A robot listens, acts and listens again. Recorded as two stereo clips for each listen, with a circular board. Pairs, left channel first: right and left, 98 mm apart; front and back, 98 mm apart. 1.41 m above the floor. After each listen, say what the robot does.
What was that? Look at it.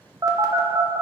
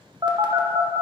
Turn 140° left.
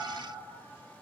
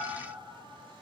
Keep listening.
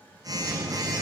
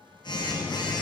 Turn 40° left.
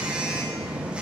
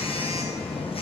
Turn 10° left.
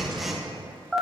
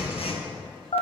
Found it: a phone buzzing, straight ahead.